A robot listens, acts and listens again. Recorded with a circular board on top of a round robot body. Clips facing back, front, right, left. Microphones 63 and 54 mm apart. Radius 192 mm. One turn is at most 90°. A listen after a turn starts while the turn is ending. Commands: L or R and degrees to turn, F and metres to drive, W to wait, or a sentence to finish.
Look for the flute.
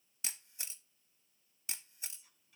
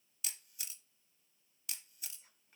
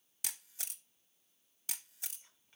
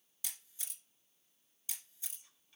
W
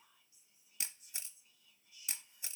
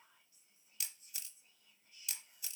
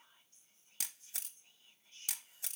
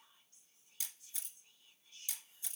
W
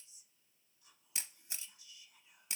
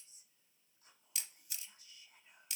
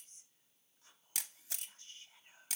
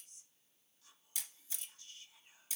I can't make out a flute, only a camera shutter and whispering.